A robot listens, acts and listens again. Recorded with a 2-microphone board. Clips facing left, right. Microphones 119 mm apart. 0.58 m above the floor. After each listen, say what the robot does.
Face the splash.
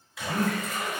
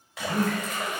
Turn 90° right.
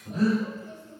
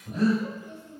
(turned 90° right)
I heard a splash from this way, but can't make it out now.